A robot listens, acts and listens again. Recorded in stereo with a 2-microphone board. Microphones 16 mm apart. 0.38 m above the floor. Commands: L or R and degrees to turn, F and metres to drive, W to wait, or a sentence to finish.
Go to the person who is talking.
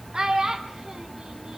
R45
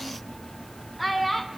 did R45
F1.0
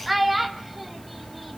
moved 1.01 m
R10
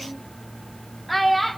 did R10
F1.0
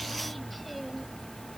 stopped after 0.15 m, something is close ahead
W
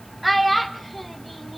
Arrived at the child speaking, straight ahead.